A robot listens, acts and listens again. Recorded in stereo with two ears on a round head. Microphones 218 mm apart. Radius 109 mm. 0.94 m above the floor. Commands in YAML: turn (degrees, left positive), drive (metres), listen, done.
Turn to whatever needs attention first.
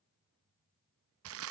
listen: true
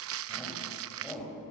turn: 30
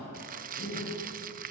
turn: 145
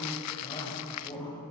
turn: 20
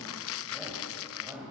turn: -10
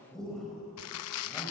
done: "Found it: a shout, straight ahead."